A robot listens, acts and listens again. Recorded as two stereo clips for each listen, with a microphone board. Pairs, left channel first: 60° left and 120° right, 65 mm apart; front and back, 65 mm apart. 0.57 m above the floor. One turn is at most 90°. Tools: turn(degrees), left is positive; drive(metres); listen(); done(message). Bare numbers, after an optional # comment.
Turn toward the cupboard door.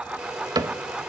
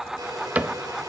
# The cupboard door: 115° right.
turn(-90)
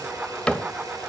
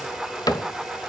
# The cupboard door is now 15° right.
turn(-15)
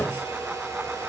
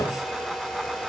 done("Facing the cupboard door.")